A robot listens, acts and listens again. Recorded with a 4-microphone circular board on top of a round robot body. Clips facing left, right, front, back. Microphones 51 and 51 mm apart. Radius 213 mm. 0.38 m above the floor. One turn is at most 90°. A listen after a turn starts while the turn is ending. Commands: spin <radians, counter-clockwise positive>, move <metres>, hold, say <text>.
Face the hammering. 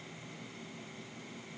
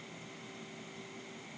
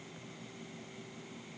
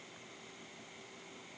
hold
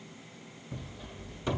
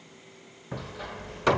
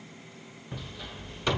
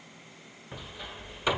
spin -1.57
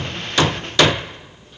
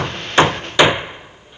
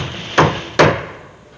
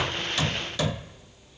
spin -0.26
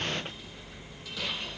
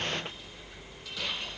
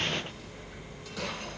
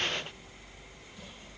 hold
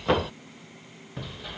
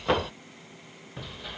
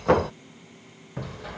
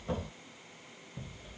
say Facing the hammering.